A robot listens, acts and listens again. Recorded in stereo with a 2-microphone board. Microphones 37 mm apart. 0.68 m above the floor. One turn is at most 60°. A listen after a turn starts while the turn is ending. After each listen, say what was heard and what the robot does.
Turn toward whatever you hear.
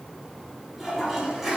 Turn 30° right.
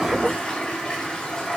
So it is at 25° left. Turn 25° left.
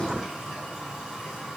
Facing the toilet flushing.